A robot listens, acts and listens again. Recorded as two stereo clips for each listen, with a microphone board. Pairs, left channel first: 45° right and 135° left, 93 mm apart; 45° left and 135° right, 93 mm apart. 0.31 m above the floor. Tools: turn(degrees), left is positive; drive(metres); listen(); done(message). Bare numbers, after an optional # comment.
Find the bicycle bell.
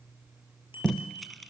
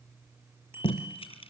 # The bicycle bell: 70° right.
turn(-70)
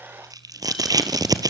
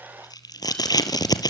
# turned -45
# Nothing new. It was at 25° right.
turn(-25)
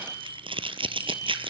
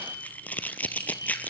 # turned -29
done("Found it: a bicycle bell, straight ahead, over 4 m away.")